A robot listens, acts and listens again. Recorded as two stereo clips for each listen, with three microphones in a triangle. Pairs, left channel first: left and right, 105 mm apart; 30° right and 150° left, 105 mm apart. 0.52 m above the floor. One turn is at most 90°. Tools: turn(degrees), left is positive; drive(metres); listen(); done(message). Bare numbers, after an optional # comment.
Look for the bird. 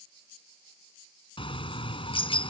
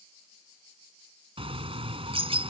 # The bird: 120° left.
turn(90)
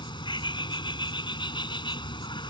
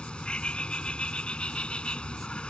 # The bird is now 50° left.
turn(50)
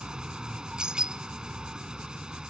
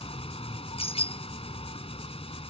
done("Found it: a bird, straight ahead.")